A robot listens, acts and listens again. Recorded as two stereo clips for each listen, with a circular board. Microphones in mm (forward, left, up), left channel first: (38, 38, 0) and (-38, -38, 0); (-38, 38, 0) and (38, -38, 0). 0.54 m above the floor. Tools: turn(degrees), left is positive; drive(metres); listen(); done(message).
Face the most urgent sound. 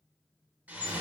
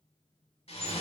listen()
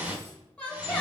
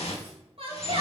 turn(degrees=-35)
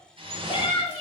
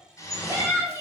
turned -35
turn(degrees=10)
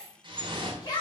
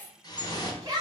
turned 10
done("Found it: a shout, straight ahead.")